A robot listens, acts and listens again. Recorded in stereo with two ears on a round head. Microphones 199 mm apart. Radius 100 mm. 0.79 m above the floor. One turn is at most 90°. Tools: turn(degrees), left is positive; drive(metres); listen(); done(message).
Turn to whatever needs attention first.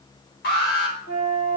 turn(degrees=45)
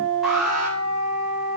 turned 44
done("Found it: an alarm, straight ahead.")